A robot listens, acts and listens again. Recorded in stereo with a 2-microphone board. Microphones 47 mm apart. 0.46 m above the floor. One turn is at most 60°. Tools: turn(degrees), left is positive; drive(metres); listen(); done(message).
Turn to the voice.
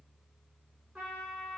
listen()
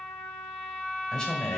turn(degrees=30)
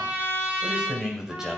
turn(degrees=-15)
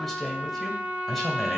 done("Facing the man speaking.")